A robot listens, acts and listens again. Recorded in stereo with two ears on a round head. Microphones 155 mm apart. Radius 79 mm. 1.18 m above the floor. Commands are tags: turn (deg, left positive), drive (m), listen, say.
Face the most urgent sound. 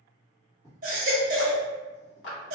<turn deg="-50"/>
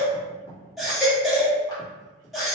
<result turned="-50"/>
<say>Found it: a baby crying, straight ahead, 1 to 2 m away.</say>